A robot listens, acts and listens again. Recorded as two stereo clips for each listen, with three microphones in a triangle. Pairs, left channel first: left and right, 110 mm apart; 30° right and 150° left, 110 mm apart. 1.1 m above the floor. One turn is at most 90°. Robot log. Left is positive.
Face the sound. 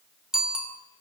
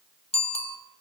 end: Found it: a bicycle bell, straight ahead, 2 to 4 m away.